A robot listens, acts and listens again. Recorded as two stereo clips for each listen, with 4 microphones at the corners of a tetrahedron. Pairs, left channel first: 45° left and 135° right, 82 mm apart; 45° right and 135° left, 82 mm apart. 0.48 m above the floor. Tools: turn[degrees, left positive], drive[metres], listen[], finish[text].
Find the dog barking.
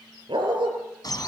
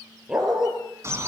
Thought: The dog barking: 140° right.
Action: turn[-140]
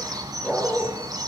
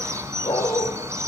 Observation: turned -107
Thought: The dog barking is now 35° right.
Action: turn[-35]
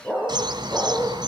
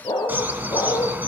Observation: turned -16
Thought: The dog barking is now 25° right.
Action: turn[-25]
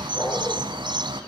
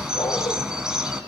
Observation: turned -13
Thought: The dog barking is now 10° right.
Action: turn[-10]
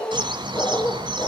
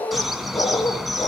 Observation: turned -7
Action: finish[Facing the dog barking, over 4 m away.]